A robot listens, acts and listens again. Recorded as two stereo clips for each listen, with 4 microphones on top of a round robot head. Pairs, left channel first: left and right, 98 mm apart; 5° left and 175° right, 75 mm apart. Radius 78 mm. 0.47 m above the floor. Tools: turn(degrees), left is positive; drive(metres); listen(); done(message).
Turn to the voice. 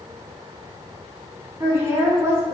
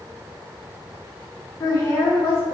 turn(degrees=-30)
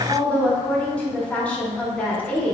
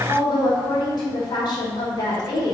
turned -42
turn(degrees=15)
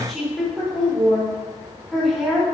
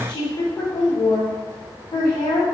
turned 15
done("Found it: a woman speaking, straight ahead, 1 to 2 m away.")